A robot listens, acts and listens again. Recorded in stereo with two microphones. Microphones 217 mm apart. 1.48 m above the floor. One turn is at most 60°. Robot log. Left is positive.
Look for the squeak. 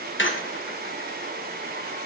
note: The squeak: about 60° left or 120° left.
cmd yaw +60
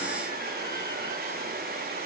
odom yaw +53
cmd idle
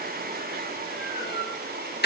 note: So it is at 55° left.
cmd yaw +55
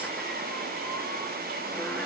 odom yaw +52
cmd idle
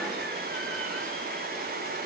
cmd idle
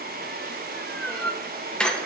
end: Found it: a squeak, straight ahead, 1 to 2 m away.